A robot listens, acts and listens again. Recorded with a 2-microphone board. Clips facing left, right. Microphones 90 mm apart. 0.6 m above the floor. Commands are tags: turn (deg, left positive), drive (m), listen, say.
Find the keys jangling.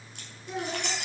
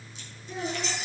<turn deg="70"/>
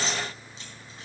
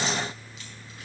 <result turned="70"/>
<listen/>
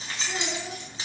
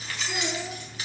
<turn deg="25"/>
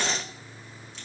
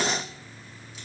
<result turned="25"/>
<listen/>
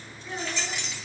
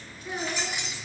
<turn deg="-15"/>
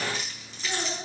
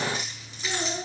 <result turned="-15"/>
<listen/>
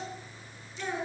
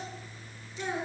<listen/>
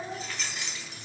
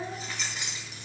<say>Facing the keys jangling, 2 to 4 m away.</say>